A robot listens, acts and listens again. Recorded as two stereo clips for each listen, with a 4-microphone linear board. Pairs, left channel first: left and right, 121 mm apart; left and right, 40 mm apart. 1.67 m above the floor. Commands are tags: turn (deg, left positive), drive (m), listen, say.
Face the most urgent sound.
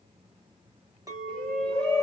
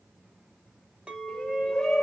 <turn deg="30"/>
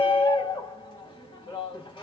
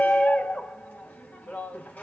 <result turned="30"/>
<turn deg="140"/>
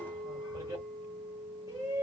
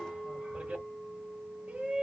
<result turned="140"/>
<turn deg="-30"/>
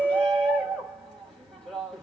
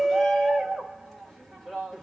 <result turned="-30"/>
<say>Found it: a shout, straight ahead, 1 to 2 m away.</say>